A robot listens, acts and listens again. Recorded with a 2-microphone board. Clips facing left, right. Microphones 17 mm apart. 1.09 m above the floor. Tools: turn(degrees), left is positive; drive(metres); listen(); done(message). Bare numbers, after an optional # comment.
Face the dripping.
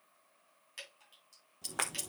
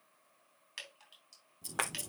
# The dripping: about 15° right or 165° right.
turn(-15)
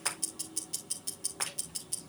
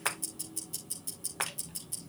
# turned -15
listen()
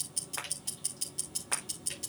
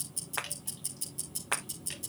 listen()
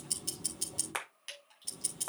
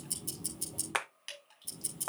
done("Facing the dripping.")